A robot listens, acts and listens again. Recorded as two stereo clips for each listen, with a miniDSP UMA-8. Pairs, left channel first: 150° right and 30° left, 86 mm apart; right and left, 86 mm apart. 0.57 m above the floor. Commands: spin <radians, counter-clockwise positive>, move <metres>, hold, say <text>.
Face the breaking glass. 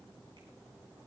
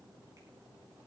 hold
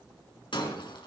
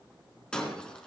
spin -2.97
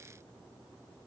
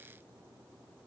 say I heard breaking glass from this way, but can't make it out now.